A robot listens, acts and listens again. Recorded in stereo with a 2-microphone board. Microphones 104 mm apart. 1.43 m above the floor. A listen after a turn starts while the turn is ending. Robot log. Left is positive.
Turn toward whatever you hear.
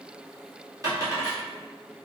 note: The dropped coin: about 35° right or 145° right.
cmd yaw -35
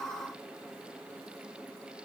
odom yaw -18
cmd idle
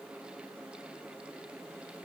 end: I heard a dropped coin, but can't make it out now. It was about 20° right or 125° right.